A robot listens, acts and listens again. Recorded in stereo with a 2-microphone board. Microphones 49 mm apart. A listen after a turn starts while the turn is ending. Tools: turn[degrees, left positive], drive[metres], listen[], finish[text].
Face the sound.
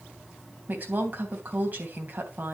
Thought: The woman speaking: about 40° right or 140° right.
Action: turn[-40]
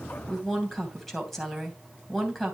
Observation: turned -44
Action: finish[Found it: a woman speaking, straight ahead.]